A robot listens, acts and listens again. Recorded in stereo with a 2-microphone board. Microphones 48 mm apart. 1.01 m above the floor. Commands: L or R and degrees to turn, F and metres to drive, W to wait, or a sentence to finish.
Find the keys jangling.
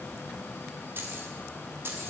R60
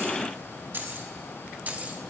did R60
R30
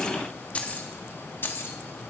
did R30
L55
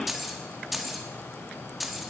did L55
Found it: keys jangling, straight ahead, 1 to 2 m away.